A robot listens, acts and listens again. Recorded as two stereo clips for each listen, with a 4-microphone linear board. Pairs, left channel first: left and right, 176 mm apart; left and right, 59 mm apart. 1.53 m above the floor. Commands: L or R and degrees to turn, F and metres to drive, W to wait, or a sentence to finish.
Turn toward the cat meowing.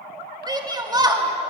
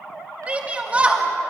W
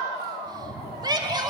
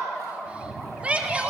L30
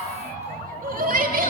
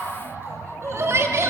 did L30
L155
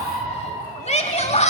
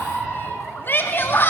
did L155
Found it: a cat meowing, straight ahead, over 4 m away.